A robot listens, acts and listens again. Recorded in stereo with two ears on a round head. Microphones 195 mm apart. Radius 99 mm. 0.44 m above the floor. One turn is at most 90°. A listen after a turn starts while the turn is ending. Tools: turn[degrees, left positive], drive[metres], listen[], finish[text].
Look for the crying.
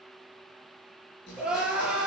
Action: turn[-30]
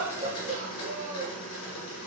Thought: So it is at 145° right.
Action: turn[-90]
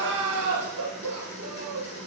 Thought: The crying is now 80° right.
Action: turn[-80]
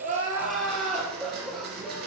Action: finish[Found it: crying, straight ahead.]